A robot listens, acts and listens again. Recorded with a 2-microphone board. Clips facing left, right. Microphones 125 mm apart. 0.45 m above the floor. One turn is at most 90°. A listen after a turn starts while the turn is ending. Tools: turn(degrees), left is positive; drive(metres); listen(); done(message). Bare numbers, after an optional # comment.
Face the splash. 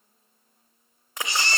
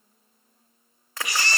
# The splash: about 20° left or 160° left.
turn(20)
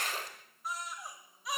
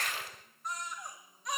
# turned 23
# So it is at 135° left.
turn(90)
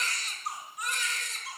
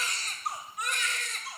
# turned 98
# Nothing new. It was at 40° left.
turn(40)
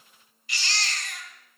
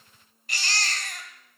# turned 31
# Nothing new. It was at 10° left.
turn(10)
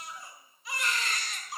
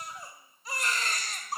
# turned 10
done("Facing where the splash came from. I can't hear it now.")